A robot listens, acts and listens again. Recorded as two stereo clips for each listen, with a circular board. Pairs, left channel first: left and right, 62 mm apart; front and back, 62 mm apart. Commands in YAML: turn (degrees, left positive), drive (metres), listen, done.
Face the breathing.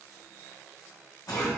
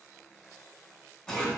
listen: true
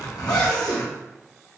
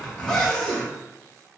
listen: true
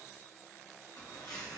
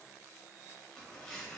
done: "I can't make out breathing to turn to."